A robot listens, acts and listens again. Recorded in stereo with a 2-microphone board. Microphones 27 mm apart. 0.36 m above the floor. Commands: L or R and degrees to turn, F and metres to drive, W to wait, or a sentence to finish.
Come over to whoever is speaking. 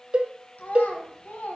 L70
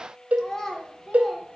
L20
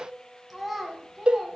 F1.0
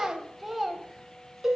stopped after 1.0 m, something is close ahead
Arrived at the child speaking, straight ahead.